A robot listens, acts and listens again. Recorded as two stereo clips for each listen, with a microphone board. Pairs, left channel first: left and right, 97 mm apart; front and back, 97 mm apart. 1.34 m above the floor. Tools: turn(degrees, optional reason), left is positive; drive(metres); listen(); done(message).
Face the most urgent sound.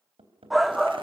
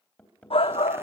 done("Facing the shout, under 1 m away.")